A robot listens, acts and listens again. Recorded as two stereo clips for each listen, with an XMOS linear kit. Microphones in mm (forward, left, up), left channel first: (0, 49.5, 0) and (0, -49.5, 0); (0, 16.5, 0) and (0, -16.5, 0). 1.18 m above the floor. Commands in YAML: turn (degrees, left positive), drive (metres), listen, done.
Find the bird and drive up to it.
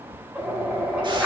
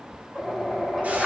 turn: -30
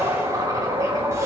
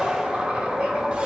turn: -145
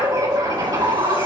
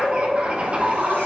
turn: -45
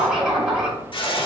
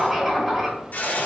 drive: 1.0
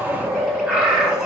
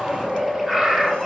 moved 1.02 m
turn: -10
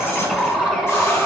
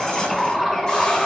drive: 1.0
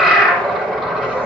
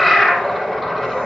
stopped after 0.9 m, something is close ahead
done: "I am next to the bird."